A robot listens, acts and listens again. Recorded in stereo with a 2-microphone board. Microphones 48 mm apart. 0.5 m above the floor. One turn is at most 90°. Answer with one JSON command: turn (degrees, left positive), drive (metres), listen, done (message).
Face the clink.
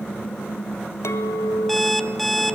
{"turn": 90}
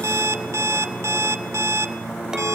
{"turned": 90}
{"listen": true}
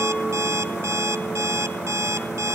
{"listen": true}
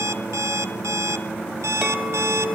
{"turn": -10}
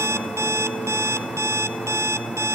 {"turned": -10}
{"listen": true}
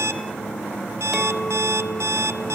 {"listen": true}
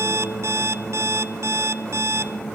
{"done": "Facing where the clink came from. I can't hear it now."}